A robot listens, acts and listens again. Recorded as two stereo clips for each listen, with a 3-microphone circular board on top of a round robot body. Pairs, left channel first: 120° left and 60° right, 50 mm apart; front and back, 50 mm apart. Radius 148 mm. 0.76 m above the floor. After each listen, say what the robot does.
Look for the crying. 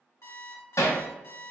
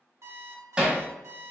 Keep listening.
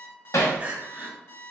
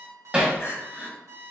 Found it: crying, straight ahead, 1 to 2 m away.